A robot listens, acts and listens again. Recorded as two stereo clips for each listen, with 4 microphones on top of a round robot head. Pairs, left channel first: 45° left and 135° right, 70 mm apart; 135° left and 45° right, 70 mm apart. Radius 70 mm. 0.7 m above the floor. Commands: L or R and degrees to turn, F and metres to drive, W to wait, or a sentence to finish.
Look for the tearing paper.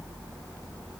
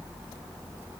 W
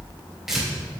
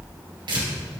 R50
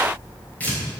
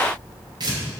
R20
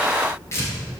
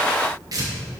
Found it: tearing paper, straight ahead.